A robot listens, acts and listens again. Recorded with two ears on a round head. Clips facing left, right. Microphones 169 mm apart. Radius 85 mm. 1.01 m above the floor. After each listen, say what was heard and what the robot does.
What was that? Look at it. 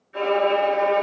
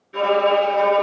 The violin: about 50° right or 130° right. Turn 50° right.
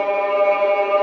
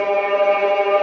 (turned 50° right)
So it is at 15° right. Turn 15° right.
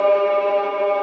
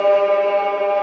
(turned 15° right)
Found it: a violin, straight ahead.